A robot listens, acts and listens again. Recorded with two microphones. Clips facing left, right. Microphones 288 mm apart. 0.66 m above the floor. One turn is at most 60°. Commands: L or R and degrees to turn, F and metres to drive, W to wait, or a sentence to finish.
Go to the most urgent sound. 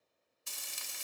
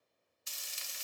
W
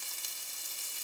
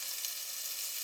W
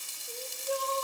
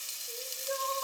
L35
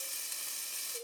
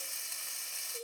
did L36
F1.0
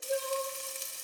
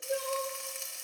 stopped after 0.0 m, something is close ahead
Something is in my way. I am facing the crying but have not reached it.